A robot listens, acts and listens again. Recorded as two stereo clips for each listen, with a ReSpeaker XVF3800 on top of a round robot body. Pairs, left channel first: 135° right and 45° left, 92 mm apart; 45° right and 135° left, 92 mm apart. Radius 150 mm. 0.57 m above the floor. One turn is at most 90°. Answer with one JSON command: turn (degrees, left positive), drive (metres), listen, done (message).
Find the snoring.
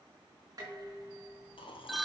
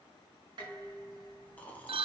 {"turn": -90}
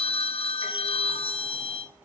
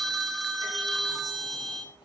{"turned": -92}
{"turn": -25}
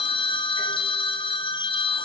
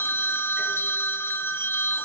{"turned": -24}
{"listen": true}
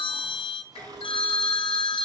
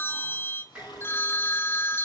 {"done": "Facing where the snoring came from. I can't hear it now."}